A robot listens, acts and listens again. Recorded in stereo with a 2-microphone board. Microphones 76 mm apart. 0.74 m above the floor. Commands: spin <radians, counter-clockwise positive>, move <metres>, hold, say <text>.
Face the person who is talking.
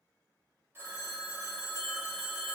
hold
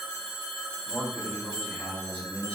spin 0.35
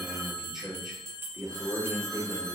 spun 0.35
spin -0.17
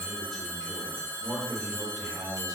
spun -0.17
say Found it: a man speaking, straight ahead, 2 to 4 m away.